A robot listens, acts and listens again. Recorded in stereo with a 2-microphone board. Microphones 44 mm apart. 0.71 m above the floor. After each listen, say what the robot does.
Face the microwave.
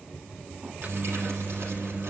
Turn 30° right.
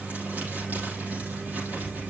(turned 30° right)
Turn 115° right.
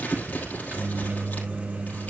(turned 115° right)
Turn 45° right.
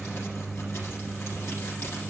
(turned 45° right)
Facing the microwave, under 1 m away.